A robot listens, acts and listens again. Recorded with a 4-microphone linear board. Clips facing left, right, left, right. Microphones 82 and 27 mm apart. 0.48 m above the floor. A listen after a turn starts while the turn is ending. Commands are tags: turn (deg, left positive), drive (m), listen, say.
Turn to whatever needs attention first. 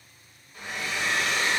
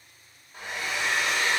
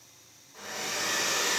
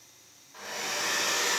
<listen/>
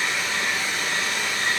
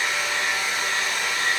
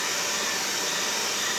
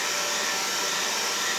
<listen/>
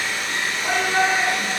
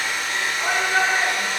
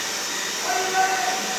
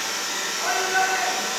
<turn deg="-55"/>
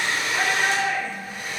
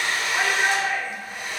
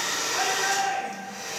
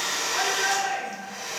<turn deg="-20"/>
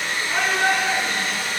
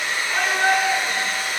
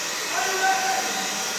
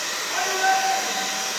<say>Facing the shout.</say>